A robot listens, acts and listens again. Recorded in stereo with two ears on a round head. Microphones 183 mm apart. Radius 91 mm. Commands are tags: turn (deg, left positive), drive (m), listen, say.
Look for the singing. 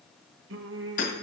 <turn deg="-65"/>
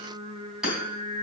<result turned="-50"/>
<turn deg="-25"/>
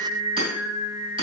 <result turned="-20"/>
<say>Found it: singing, straight ahead, 1 to 2 m away.</say>